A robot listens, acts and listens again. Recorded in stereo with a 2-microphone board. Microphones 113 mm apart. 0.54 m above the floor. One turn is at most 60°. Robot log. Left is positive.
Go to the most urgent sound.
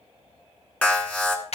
cmd yaw +30
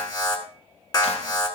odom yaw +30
note: So it is at 135° left.
cmd yaw +60
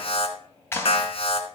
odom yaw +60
note: The alarm is now 85° left.
cmd yaw +60
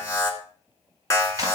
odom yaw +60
note: The alarm is now 30° left.
cmd yaw +30
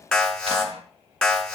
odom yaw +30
note: The alarm is now 10° left.
cmd yaw +10
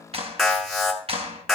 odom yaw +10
cmd fwd 1.0
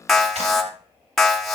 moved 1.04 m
cmd fwd 1.0
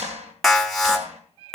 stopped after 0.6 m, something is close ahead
end: Arrived at the alarm, straight ahead.